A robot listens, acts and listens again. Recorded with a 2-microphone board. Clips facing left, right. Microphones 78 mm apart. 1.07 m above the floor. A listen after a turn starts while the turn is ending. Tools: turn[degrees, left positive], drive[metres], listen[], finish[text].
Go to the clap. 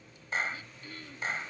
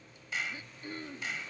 Thought: The clap: about 40° left or 140° left.
Action: turn[40]
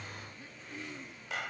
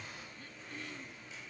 Thought: So it is at 100° left.
Action: turn[100]
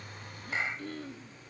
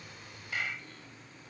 Thought: The clap is now 25° left.
Action: turn[25]
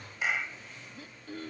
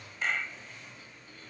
Thought: The clap is now 10° left.
Action: turn[10]
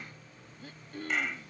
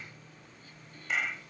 Action: drive[1.0]
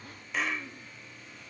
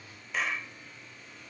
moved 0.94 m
Action: drive[1.0]
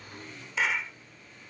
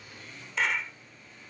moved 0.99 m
Action: drive[1.0]
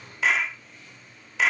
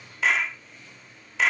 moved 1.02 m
Action: drive[1.0]
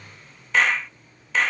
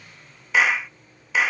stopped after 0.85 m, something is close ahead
Thought: The clap is now 10° right.
Action: turn[-10]
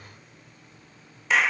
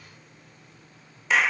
Action: finish[Arrived at the clap, straight ahead.]